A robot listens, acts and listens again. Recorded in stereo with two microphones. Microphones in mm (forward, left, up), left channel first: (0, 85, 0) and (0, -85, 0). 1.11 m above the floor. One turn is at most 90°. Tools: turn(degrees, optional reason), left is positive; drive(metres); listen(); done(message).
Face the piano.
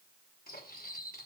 listen()
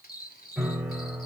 turn(degrees=-30)
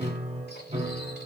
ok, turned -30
turn(degrees=-90, reason="So it is at 140° right.")
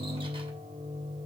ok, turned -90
turn(degrees=-25, reason="The piano is now 25° right.")
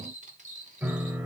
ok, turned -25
turn(degrees=-10, reason="The piano is now 10° right.")
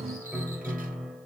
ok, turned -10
done("Found it: a piano, straight ahead, 2 to 4 m away.")